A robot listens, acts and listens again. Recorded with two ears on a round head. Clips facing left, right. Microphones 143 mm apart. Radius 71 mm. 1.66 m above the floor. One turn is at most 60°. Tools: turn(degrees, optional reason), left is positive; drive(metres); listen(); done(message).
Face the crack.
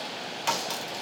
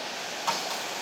turn(degrees=35, reason="The crack: about 35° left or 145° left.")
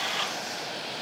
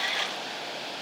listen()
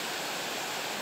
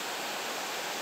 done("I heard a crack, but can't make it out now. It was about straight ahead or 110° left.")